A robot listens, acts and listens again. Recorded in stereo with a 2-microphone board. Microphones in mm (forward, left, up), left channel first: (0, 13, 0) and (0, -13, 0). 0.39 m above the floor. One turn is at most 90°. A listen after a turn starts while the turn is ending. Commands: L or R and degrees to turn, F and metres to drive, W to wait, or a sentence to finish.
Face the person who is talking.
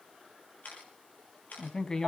L30
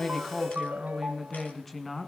Facing the woman speaking, 2 to 4 m away.